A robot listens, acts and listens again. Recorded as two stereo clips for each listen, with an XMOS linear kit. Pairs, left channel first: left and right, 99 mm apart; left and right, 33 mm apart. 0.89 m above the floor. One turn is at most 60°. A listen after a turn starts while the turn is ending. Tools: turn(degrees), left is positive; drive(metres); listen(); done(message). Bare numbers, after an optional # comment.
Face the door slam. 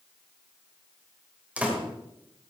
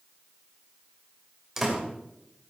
turn(-30)
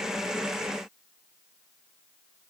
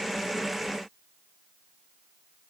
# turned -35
listen()
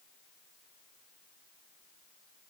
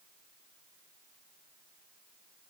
done("I heard a door slam, but can't make it out now. It was about 20° left or 130° right.")